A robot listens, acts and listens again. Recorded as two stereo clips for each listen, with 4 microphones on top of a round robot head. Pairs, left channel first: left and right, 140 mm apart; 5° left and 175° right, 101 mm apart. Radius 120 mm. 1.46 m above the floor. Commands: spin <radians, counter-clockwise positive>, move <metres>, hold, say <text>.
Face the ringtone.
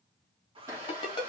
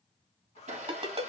spin 2.62
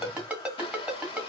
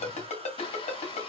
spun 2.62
say Found it: a ringtone, straight ahead, 2 to 4 m away.